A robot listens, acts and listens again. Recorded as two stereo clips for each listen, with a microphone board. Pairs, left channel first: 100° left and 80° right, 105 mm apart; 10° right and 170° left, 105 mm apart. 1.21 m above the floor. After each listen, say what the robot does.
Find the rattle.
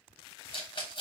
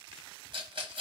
Turn 130° left.
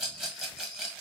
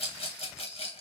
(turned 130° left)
Found it: a rattle, straight ahead, 1 to 2 m away.